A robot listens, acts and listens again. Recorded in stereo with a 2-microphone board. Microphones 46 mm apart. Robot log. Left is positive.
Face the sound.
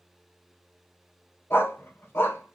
note: The dog barking: about 60° left or 120° left.
cmd yaw +60
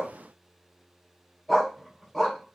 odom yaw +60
end: Found it: a dog barking, straight ahead, 2 to 4 m away.